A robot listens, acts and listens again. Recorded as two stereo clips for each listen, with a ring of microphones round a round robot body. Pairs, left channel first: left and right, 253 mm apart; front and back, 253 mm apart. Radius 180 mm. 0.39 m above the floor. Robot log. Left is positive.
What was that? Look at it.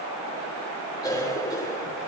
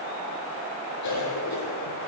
note: The cough: 10° left.
cmd yaw +10
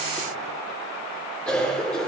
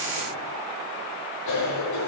end: Facing the cough, over 4 m away.